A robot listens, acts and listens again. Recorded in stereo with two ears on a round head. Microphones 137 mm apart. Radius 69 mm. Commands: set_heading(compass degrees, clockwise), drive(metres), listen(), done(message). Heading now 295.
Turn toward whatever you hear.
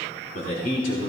set_heading(235)
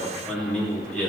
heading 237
done("Found it: a man speaking, straight ahead.")